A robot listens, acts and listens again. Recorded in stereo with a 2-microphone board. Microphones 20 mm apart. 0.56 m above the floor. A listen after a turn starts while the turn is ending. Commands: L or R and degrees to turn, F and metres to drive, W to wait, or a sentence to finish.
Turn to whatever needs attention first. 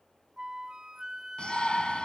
L45
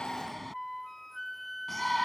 Facing the shout.